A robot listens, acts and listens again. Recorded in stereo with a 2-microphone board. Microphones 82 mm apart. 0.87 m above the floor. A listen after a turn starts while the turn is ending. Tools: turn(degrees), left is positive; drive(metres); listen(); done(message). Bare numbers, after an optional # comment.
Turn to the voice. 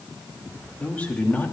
# The man speaking: about 20° left or 160° left.
turn(20)
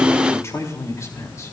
# The man speaking: about 40° left or 140° left.
turn(40)
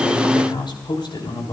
# So it is at 100° left.
turn(100)
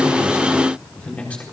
# The man speaking is now 15° left.
turn(15)
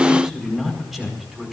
done("Found it: a man speaking, straight ahead, over 4 m away.")